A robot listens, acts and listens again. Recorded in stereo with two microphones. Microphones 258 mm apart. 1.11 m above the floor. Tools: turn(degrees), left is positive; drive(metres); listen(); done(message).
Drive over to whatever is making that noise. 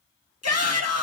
turn(degrees=90)
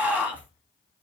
drive(metres=1.0)
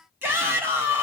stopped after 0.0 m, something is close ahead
turn(degrees=-10)
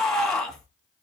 done("Blocked. The shout is further on, straight ahead.")